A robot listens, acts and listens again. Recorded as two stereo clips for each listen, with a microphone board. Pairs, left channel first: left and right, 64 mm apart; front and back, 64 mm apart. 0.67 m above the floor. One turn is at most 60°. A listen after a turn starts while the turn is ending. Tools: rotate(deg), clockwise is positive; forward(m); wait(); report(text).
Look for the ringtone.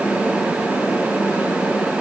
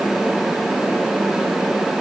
wait()
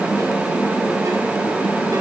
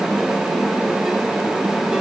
wait()
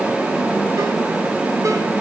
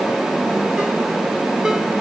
report("I can't make out a ringtone to turn to.")